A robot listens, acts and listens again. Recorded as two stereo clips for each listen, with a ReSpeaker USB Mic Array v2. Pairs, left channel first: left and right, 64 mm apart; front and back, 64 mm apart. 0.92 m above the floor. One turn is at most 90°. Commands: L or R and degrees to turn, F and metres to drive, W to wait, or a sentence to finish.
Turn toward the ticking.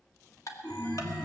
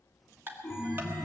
L90
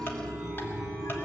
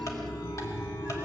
L35
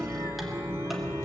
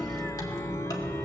W
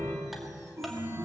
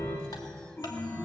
I heard ticking from this way, but can't make it out now.